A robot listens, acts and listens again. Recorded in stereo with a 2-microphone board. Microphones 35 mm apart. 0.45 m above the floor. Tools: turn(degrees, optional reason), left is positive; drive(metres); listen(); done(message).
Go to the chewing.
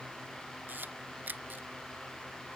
listen()
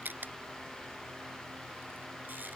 listen()
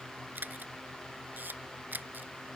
done("I can't make out chewing to turn to.")